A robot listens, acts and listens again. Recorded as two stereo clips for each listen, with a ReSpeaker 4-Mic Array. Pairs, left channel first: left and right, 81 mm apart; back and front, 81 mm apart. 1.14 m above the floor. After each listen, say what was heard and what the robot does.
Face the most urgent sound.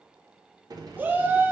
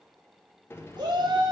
The shout: 25° right. Turn 25° right.
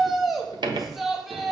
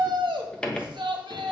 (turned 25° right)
Facing the shout, 1 to 2 m away.